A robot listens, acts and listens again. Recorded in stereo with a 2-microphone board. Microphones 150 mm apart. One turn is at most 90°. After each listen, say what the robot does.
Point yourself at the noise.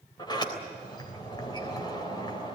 Turn 30° left.
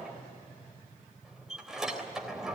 Found it: a sliding door, straight ahead.